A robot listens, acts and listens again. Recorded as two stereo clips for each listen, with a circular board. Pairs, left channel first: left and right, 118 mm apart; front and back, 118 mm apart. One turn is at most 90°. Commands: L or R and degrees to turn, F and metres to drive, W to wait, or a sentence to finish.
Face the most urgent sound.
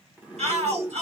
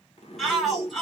R90
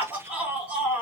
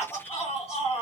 R15
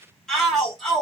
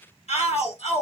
Facing the shout.